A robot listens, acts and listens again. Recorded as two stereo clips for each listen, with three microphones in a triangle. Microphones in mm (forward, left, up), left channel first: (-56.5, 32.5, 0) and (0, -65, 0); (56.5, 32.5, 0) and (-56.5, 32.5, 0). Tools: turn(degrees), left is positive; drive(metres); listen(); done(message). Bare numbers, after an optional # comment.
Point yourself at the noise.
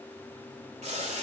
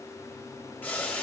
# The boiling: 75° right.
turn(-75)
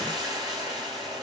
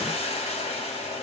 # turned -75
# The boiling is now 10° right.
turn(-10)
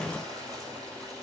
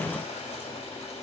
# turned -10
done("Facing the boiling, 1 to 2 m away.")